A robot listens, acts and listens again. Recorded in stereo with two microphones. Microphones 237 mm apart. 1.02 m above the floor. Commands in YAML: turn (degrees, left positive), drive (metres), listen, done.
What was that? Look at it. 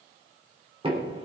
turn: -25
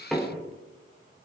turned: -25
done: "Facing the knocking, 2 to 4 m away."